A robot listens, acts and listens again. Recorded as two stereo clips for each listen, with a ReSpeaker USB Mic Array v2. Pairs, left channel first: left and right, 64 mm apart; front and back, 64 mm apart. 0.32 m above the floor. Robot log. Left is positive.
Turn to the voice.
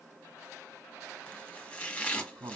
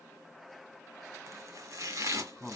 note: The man speaking: 90° right.
cmd yaw -90
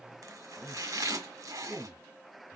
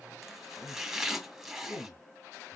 note: The man speaking is now 15° left.
cmd yaw +15
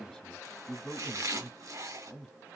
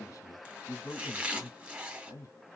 end: Facing the man speaking, 2 to 4 m away.